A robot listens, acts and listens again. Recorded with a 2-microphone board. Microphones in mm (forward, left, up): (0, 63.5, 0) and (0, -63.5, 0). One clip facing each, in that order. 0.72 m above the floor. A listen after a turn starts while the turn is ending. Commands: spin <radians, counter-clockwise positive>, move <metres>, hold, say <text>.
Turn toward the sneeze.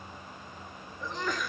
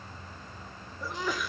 spin -0.52
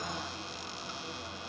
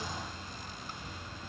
hold
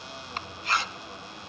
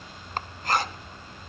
say I heard a sneeze, but can't make it out now. It was about 25° left or 145° right.